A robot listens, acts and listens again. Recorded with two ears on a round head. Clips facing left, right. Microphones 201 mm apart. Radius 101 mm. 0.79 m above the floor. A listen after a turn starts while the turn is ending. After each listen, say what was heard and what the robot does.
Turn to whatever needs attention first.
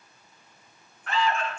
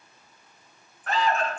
The alarm: about 35° right or 145° right. Turn 35° right.
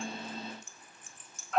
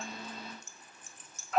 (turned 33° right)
Facing the alarm, under 1 m away.